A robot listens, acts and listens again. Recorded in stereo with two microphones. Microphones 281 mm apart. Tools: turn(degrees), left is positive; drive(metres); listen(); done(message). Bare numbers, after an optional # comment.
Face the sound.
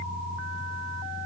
listen()
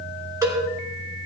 turn(-30)
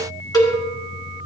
# So it is at 15° left.
turn(15)
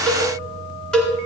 done("Facing the cowbell.")